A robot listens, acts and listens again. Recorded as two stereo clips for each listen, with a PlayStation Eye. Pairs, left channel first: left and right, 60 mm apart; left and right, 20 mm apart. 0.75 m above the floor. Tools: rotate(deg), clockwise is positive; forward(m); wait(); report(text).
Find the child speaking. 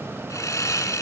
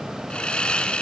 wait()
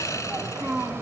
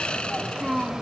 rotate(90)
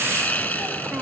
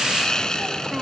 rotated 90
wait()
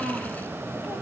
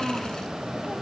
report("Facing the child speaking, 2 to 4 m away.")